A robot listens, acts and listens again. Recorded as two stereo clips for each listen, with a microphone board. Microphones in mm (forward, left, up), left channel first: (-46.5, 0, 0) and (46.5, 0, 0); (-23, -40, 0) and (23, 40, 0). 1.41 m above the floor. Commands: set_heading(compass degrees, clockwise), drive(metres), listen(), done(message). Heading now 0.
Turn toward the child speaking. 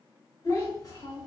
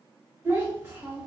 set_heading(230)
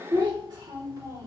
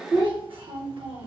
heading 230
set_heading(180)
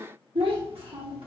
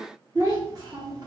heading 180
set_heading(155)
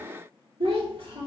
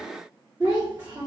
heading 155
set_heading(145)
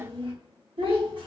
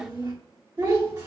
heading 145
set_heading(130)
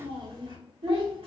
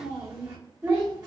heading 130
done("Found it: a child speaking, straight ahead, 1 to 2 m away.")